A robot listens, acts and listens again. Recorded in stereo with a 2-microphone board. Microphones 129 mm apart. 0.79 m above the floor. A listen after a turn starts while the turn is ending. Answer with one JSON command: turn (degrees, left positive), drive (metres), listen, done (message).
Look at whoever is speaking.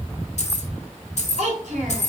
{"turn": -70}
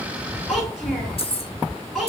{"done": "Facing the child speaking, 2 to 4 m away."}